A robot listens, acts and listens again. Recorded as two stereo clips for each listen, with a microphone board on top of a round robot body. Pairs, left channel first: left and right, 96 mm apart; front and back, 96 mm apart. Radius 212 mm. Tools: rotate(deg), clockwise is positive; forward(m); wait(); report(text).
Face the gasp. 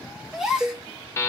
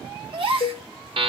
rotate(170)
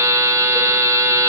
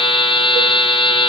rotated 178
report("Facing where the gasp came from. I can't hear it now.")